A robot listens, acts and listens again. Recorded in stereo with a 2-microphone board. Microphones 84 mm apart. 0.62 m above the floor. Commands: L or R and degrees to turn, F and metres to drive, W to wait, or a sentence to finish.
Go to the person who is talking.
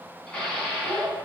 R40
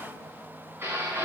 W
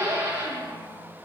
W
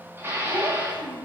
R100
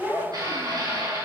F1.0
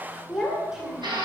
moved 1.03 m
F1.0
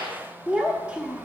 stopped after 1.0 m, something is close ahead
R20
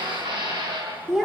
Arrived at the child speaking, straight ahead.